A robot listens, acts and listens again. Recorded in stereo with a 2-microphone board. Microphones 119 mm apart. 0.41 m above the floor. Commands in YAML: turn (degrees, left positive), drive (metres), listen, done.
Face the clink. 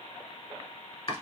listen: true
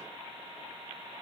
listen: true
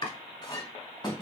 turn: 35
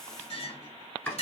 turn: 105
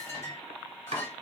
turn: 25
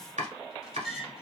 done: "Facing the clink, 1 to 2 m away."